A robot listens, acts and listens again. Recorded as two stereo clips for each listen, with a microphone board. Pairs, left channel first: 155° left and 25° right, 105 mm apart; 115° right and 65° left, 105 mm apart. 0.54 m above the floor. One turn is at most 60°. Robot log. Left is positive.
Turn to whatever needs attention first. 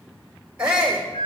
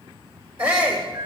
note: The shout: 55° left.
cmd yaw +55
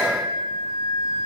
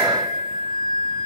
cmd idle
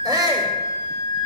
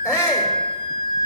end: Facing the shout, 1 to 2 m away.